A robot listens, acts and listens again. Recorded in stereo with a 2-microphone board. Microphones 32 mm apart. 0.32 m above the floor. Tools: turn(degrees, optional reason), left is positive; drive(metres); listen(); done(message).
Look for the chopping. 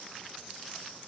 listen()
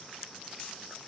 listen()
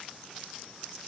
done("I can't make out chopping to turn to.")